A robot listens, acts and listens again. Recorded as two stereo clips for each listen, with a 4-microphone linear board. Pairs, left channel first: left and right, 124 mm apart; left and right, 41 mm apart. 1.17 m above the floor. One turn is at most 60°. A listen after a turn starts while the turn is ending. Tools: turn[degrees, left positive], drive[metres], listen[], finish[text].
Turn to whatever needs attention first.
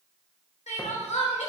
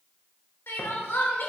Thought: The crying: about 75° left or 105° left.
Action: turn[60]
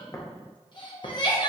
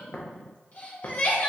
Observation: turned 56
Thought: So it is at 40° left.
Action: turn[40]
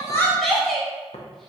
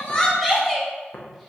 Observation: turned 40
Action: finish[Facing the crying.]